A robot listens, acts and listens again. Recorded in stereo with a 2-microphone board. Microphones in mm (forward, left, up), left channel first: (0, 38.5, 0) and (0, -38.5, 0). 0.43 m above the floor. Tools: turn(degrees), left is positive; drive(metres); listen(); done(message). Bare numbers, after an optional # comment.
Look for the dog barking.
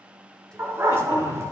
# The dog barking: about 35° right or 145° right.
turn(-35)
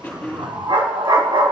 # So it is at 100° right.
turn(-100)
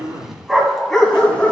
# The dog barking is now 15° left.
turn(15)
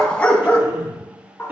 # The dog barking is now 25° left.
turn(25)
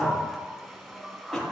listen()
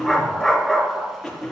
done("Facing the dog barking.")